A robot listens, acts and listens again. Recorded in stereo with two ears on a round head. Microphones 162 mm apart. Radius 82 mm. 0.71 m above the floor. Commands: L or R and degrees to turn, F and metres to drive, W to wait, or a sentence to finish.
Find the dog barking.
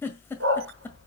R70
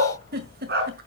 R60
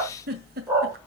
R10
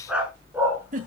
R10
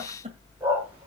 R10
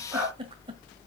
Facing the dog barking.